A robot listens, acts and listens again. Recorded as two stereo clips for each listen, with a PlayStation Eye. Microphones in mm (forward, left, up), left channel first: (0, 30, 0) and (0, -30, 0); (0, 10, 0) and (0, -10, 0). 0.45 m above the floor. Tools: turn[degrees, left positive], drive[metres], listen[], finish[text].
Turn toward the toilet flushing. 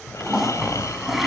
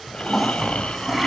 Action: turn[-30]
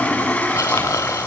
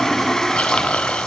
Thought: So it is at 25° left.
Action: turn[25]
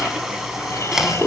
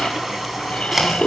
Thought: The toilet flushing is now 10° right.
Action: turn[-10]
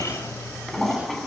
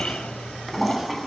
Action: finish[Found it: a toilet flushing, straight ahead.]